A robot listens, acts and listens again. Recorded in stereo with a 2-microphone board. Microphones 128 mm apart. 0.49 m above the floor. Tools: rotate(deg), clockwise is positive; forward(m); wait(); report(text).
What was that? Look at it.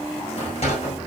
rotate(-55)
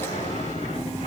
wait()
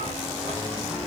wait()
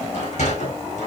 rotate(-75)
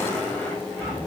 wait()
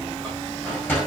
rotate(-15)
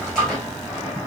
report("Found it: a sliding door, straight ahead.")